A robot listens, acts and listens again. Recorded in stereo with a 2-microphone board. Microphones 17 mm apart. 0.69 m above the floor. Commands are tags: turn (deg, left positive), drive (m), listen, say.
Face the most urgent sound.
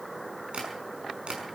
<listen/>
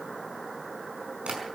<listen/>
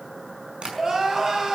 <turn deg="-40"/>
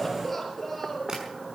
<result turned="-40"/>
<say>Found it: crying, straight ahead.</say>